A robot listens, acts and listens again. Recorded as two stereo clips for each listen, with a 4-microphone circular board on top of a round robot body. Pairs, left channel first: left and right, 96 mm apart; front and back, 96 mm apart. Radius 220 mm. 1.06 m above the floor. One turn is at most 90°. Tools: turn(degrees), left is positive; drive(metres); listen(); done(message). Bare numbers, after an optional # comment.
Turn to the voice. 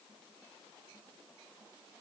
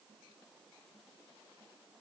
listen()
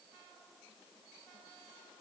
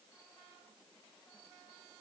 listen()
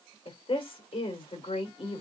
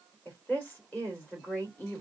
# The woman speaking: 70° left.
turn(70)
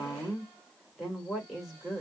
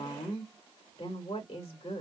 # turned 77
done("Found it: a woman speaking, straight ahead, 2 to 4 m away.")